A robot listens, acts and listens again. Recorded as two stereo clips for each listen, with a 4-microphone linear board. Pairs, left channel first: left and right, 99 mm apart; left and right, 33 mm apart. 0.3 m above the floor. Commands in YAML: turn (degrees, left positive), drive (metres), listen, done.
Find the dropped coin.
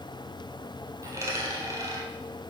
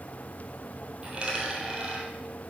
turn: -30
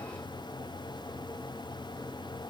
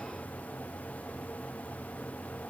listen: true
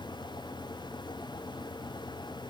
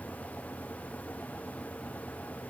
done: "I heard a dropped coin, but can't make it out now. It was about straight ahead or 120° right."